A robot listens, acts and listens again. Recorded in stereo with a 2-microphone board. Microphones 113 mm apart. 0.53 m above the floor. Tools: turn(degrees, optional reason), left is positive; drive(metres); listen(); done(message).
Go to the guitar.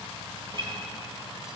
turn(degrees=-50, reason="The guitar: about 50° right or 130° right.")
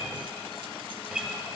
drive(metres=1.0)
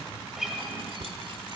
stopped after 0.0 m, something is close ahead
done("Blocked. The guitar is further on, straight ahead.")